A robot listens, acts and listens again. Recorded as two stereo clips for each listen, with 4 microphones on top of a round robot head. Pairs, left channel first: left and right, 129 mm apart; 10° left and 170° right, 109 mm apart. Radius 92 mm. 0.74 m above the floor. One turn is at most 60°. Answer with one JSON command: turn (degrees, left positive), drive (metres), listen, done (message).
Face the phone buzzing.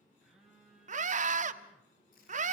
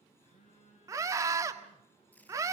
{"done": "Found it: a phone buzzing, straight ahead, over 4 m away."}